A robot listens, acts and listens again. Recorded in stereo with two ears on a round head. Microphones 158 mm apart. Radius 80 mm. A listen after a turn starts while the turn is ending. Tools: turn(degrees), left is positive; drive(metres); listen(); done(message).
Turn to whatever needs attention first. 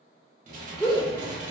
turn(degrees=30)
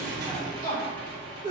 turn(degrees=-30)
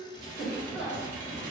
done("Found it: a shout, straight ahead, 1 to 2 m away.")